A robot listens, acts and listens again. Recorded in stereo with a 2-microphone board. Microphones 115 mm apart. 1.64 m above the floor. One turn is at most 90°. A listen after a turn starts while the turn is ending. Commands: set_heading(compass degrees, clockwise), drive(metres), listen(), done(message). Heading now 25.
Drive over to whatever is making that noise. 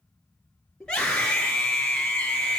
set_heading(355)
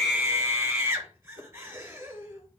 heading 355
set_heading(20)
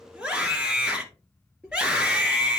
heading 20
set_heading(30)
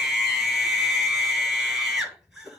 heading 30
drive(1.0)
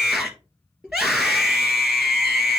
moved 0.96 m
drive(1.0)
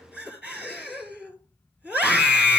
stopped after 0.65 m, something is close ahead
set_heading(40)
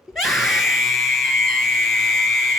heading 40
done("I am next to the scream.")